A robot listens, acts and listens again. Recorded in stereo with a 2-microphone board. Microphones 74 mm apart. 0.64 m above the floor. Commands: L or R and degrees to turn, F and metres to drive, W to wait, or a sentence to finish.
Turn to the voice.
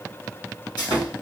W
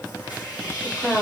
L25
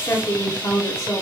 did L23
L130
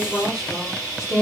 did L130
Facing the woman speaking, 1 to 2 m away.